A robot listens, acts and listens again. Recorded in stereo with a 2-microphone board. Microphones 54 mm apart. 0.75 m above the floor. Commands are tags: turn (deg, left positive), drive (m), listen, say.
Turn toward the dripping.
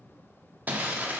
<listen/>
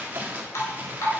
<turn deg="70"/>
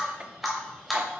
<say>Facing the dripping, 2 to 4 m away.</say>